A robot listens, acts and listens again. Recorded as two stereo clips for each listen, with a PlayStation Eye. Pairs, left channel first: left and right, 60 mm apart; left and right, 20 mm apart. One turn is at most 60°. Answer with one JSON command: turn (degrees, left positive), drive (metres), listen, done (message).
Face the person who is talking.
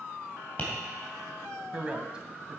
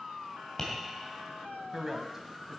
{"turn": -20}
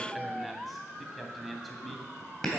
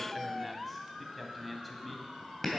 {"done": "Found it: a man speaking, straight ahead."}